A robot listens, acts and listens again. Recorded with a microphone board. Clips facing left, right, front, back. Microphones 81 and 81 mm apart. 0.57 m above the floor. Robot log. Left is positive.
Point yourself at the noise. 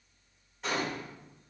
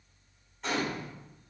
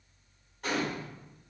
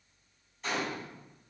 end: Facing the gunshot, 1 to 2 m away.